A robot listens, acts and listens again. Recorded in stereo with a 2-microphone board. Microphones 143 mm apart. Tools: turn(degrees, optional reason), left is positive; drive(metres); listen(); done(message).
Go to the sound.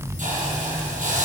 turn(degrees=-65, reason="The hiss: about 65° right or 115° right.")
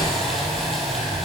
drive(metres=1.0)
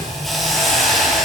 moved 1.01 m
drive(metres=1.0)
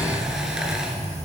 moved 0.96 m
listen()
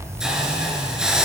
drive(metres=1.0)
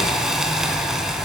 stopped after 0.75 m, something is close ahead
done("Arrived at the hiss, straight ahead.")